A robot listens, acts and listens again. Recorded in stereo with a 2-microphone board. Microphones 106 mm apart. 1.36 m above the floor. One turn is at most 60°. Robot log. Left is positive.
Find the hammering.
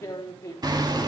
note: The hammering: about 40° right or 140° right.
cmd yaw -40
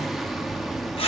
end: Found it: hammering, straight ahead, 2 to 4 m away.